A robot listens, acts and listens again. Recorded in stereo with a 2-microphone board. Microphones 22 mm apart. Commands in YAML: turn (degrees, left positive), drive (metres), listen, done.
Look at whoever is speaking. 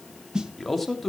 turn: 30
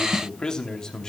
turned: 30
turn: 150
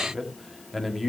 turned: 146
done: "Found it: a man speaking, straight ahead."